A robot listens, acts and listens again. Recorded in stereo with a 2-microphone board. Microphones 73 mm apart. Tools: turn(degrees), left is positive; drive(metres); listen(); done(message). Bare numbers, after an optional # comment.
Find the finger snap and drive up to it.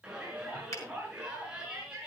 # The finger snap: about 40° left or 140° left.
turn(40)
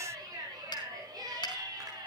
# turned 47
# So it is at 90° left.
turn(90)
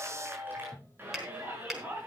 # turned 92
drive(1.0)
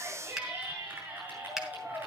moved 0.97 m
drive(1.0)
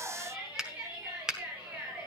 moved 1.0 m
# The finger snap is now 10° right.
turn(-10)
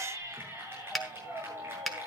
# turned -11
drive(1.0)
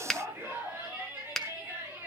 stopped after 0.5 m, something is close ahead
done("I am next to the finger snap.")